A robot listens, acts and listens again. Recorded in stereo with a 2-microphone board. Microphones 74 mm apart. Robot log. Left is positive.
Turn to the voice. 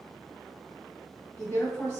note: The woman speaking: about 40° left or 140° left.
cmd yaw +40
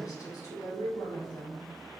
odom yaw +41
note: So it is at 90° left.
cmd yaw +90
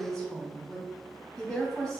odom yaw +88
end: Facing the woman speaking, 1 to 2 m away.